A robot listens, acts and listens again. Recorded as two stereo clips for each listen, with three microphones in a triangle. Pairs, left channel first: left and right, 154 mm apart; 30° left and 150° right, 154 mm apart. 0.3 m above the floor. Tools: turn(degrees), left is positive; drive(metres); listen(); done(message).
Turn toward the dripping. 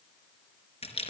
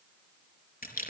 listen()
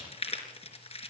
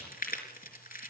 listen()
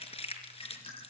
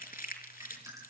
turn(degrees=140)
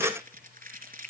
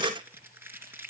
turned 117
turn(degrees=25)
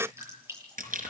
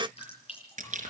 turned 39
turn(degrees=-15)
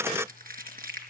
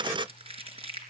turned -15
listen()
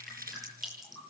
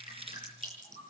done("Facing the dripping, over 4 m away.")